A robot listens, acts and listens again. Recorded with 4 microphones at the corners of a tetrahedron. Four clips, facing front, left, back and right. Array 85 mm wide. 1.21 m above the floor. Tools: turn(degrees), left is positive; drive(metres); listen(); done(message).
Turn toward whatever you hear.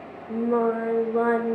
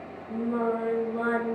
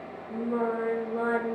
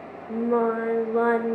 turn(degrees=-65)
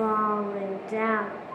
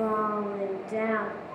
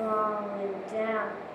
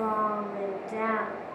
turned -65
done("Found it: singing, straight ahead.")